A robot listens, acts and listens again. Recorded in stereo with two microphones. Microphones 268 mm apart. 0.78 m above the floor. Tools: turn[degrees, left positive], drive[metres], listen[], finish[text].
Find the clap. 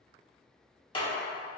Thought: The clap: about 20° left or 160° left.
Action: turn[20]
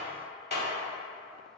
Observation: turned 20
Thought: So it is at 140° left.
Action: turn[140]
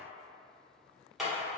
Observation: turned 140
Action: finish[Facing the clap.]